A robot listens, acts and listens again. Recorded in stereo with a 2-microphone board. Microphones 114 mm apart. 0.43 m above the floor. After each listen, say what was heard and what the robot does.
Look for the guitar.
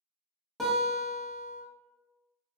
Turn 30° left.
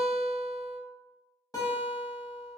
So it is at 150° left. Turn 150° left.
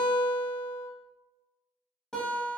Facing the guitar, under 1 m away.